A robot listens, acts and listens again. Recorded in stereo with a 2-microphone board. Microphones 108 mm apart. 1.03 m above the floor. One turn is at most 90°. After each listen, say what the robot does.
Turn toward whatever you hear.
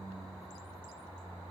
Keep listening.
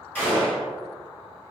Turn 15° left.
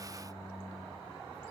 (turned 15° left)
Keep listening.
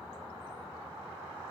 I heard a gunshot, but can't make it out now. It was about straight ahead or 150° left.